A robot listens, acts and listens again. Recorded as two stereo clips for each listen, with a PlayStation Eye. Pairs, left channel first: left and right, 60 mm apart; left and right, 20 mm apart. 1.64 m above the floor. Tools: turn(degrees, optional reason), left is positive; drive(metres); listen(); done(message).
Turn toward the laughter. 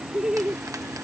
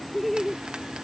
turn(degrees=-30)
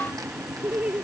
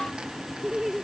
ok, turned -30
turn(degrees=-25, reason="The laughter: about 25° right or 155° right.")
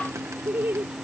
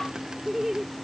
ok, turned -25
turn(degrees=-140, reason="So it is at 140° right.")
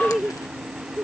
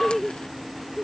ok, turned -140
turn(degrees=-10, reason="The laughter is now 10° right.")
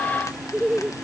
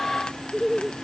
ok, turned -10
done("Found it: laughter, straight ahead.")